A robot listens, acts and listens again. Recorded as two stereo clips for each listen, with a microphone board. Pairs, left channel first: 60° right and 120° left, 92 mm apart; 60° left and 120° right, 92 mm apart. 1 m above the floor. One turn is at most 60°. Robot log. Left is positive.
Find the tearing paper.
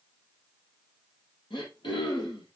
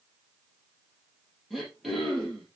cmd idle
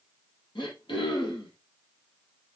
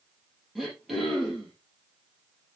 cmd idle
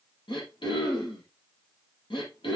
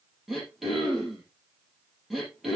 end: I can't make out tearing paper to turn to.